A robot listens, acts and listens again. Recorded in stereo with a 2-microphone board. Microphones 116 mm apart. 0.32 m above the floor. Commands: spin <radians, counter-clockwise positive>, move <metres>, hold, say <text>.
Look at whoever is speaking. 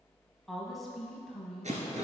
spin 0.52
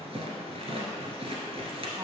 hold
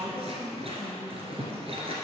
spin -0.52
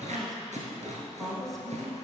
say Found it: a woman speaking, straight ahead.